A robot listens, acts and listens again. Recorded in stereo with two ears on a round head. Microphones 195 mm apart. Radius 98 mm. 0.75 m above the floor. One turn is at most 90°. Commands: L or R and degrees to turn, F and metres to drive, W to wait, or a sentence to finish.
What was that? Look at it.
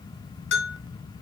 L65
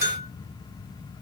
L50
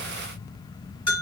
L25
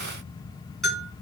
Facing the bell.